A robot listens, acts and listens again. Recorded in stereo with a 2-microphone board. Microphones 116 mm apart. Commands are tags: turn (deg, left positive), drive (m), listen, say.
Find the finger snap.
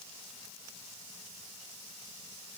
<listen/>
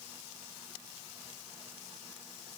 <listen/>
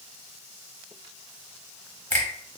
<turn deg="30"/>
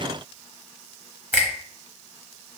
<turn deg="-15"/>
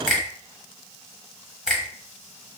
<say>Found it: a finger snap, straight ahead.</say>